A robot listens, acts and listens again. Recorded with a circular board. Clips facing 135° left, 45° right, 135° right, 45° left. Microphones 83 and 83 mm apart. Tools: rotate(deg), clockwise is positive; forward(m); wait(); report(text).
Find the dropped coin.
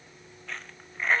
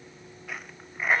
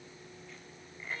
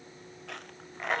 rotate(-35)
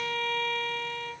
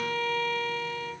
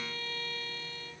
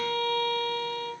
report("I heard a dropped coin from this way, but can't make it out now.")